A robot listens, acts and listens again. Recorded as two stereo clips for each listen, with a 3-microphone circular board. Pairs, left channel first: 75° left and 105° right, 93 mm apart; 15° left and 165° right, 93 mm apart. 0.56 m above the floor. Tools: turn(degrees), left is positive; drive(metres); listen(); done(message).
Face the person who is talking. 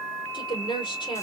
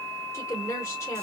turn(degrees=70)
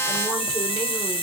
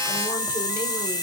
listen()
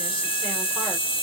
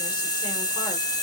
listen()
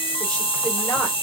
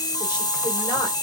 done("Facing where the woman speaking came from. I can't hear it now.")